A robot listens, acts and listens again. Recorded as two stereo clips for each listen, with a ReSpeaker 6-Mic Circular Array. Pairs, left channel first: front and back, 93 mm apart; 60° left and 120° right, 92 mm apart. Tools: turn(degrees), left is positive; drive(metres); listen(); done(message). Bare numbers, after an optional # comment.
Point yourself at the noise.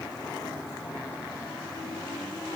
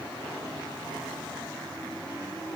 listen()
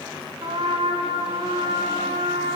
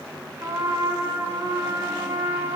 # The trumpet: straight behind.
turn(180)
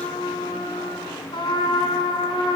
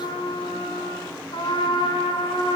# The trumpet is now 30° left.
turn(30)
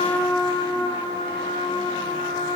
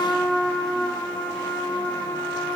done("Found it: a trumpet, straight ahead, over 4 m away.")